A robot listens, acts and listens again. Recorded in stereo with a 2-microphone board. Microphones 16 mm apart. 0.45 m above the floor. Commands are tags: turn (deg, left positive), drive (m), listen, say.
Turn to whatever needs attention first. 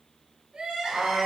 <turn deg="-90"/>
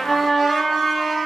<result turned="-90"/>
<listen/>
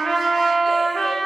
<listen/>
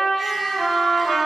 <say>Facing where the crying came from. I can't hear it now.</say>